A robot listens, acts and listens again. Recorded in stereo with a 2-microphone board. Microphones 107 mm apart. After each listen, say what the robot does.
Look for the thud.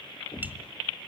Turn 55° left.
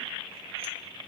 Keep listening.
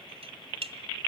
I heard a thud, but can't make it out now. It was about straight ahead or 70° left.